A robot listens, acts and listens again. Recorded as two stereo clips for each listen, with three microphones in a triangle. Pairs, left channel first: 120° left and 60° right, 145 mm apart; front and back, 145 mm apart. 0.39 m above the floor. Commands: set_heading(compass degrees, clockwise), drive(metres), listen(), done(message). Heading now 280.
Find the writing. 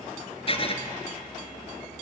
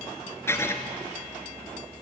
set_heading(210)
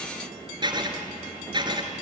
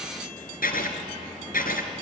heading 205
done("Facing the writing, 1 to 2 m away.")